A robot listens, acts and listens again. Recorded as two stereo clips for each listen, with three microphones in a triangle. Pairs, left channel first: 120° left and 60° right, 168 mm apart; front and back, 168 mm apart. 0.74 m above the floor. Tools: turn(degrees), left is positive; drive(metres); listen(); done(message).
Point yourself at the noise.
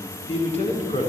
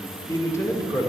turn(degrees=70)
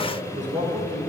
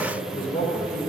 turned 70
turn(degrees=-20)
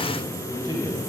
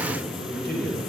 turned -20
done("Facing the man speaking.")